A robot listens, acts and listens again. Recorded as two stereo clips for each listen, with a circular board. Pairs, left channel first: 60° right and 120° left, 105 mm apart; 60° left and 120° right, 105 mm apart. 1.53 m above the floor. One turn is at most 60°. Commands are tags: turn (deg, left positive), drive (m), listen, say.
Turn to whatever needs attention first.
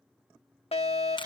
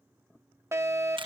<turn deg="-55"/>
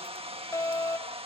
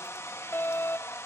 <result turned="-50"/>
<say>Facing the fire alarm.</say>